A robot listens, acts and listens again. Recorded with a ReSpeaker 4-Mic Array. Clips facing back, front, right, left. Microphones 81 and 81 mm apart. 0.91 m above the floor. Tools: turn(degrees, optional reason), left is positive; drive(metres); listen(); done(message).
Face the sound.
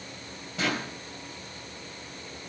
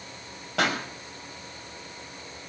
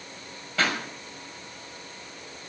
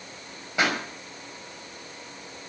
turn(degrees=15, reason="The pop: 15° left.")
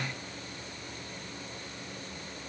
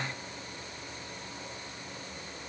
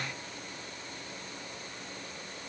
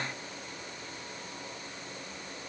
done("Facing where the pop came from. I can't hear it now.")